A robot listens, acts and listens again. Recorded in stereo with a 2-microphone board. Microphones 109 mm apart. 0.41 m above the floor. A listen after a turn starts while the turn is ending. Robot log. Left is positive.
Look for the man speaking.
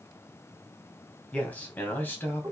note: The man speaking: about 20° left or 160° left.
cmd yaw +20
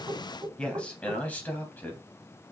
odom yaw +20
note: The man speaking: about 20° left or 160° left.
cmd yaw +20
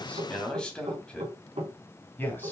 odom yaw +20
note: The man speaking: about 20° left or 160° left.
cmd yaw +20
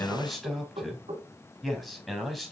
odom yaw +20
cmd yaw +30
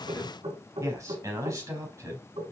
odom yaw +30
note: So it is at 30° right.
cmd yaw -30
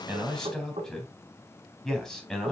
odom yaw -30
end: Facing the man speaking.